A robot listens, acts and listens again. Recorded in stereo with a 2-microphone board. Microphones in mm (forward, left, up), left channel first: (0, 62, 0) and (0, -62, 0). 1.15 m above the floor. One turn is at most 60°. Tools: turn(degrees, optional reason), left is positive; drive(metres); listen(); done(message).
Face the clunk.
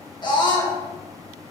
listen()
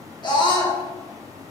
listen()
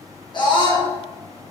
done("I can't make out a clunk to turn to.")